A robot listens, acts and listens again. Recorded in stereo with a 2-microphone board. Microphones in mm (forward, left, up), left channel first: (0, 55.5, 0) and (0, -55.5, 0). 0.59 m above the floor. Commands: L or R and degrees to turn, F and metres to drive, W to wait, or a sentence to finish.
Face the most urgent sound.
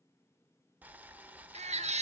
R90
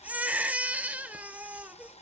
R15
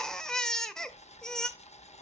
Found it: a baby crying, straight ahead.